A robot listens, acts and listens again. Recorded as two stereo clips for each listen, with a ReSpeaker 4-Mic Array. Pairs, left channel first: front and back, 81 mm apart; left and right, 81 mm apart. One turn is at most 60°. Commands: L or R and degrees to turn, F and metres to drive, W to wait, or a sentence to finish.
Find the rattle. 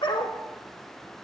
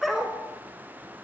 W
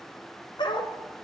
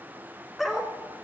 W
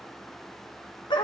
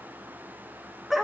I can't make out a rattle to turn to.